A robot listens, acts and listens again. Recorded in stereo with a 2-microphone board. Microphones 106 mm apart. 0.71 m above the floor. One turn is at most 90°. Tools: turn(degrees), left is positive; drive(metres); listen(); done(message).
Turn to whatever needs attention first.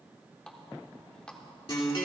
listen()
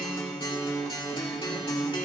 listen()
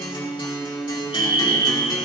turn(degrees=60)
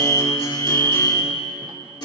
turn(degrees=25)
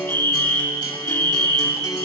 turn(degrees=25)
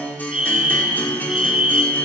turn(degrees=-10)
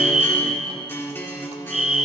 done("Found it: a fire alarm, straight ahead, 2 to 4 m away.")